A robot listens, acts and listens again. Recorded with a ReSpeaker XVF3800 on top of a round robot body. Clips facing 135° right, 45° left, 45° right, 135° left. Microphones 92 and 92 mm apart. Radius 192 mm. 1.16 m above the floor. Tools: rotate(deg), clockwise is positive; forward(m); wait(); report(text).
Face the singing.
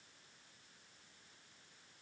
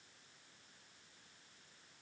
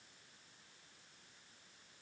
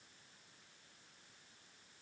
wait()
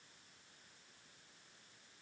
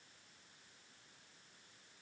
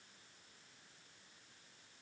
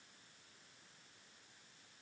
wait()
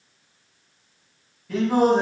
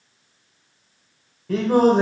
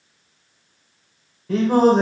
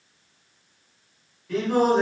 report("Facing the singing, 2 to 4 m away.")